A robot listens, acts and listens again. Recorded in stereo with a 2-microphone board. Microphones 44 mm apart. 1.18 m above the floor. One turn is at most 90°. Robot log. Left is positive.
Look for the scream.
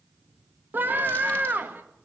note: The scream: about 50° right or 130° right.
cmd yaw -50
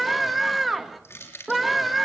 end: Found it: a scream, straight ahead, 2 to 4 m away.